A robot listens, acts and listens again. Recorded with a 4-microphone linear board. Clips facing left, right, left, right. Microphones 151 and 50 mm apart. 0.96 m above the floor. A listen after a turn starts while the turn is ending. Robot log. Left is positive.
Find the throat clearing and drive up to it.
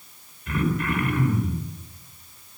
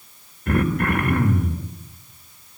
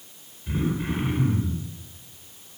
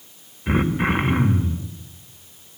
note: The throat clearing: about 55° right or 125° right.
cmd yaw -55
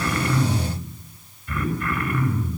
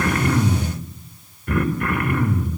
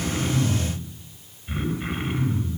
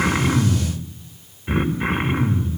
note: So it is at 70° right.
cmd yaw -70
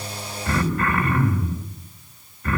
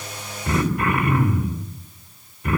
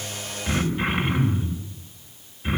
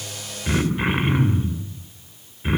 note: The throat clearing is now 15° right.
cmd yaw -15
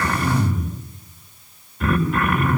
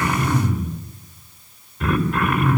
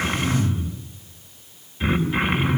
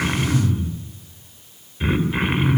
cmd fwd 1.0
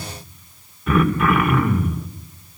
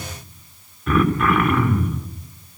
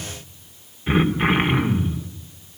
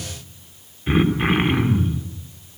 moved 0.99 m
cmd fwd 1.0
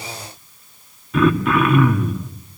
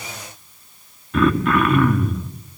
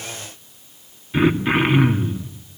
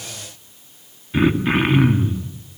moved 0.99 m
cmd fwd 1.0
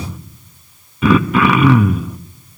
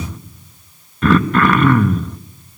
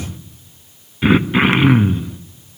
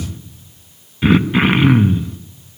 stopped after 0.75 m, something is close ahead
end: Arrived at the throat clearing, straight ahead.